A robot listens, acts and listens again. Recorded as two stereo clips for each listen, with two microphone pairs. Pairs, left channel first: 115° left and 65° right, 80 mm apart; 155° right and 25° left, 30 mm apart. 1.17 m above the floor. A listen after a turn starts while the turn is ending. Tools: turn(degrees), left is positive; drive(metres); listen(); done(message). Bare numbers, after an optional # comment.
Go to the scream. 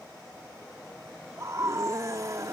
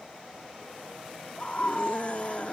# The scream: 110° right.
turn(-110)
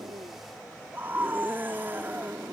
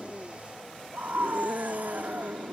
drive(1.0)
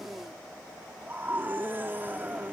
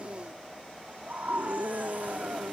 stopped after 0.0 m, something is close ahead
done("Blocked. The scream is further on, straight ahead.")